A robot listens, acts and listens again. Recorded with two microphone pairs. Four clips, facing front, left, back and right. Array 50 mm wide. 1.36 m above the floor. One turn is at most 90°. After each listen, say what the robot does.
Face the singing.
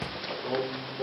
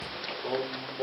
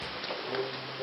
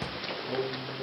Turn 75° left.
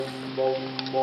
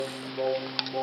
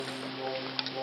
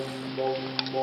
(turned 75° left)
Turn 10° right.
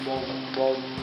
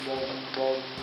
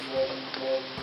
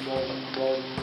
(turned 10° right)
Facing the singing, 2 to 4 m away.